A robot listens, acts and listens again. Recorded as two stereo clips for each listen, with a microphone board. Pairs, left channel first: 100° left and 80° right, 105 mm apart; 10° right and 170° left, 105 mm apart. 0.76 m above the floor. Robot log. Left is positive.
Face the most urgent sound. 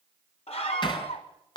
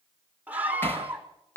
note: The scream: 95° left.
cmd yaw +95
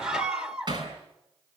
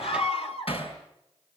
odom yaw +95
end: Facing the scream, 2 to 4 m away.